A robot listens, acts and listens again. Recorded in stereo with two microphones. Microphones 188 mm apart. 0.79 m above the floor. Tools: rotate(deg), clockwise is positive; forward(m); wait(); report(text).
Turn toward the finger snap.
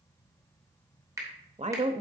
rotate(15)
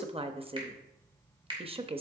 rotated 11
rotate(155)
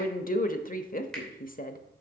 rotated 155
report("Found it: a finger snap, straight ahead, 2 to 4 m away.")